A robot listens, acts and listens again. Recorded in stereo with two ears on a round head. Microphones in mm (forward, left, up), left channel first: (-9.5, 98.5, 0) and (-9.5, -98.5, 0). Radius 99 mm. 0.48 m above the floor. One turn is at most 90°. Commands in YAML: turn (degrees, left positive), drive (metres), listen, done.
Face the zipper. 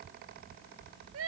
listen: true
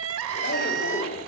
turn: 40
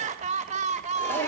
turn: 10
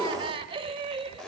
done: "Found it: a zipper, straight ahead, 1 to 2 m away."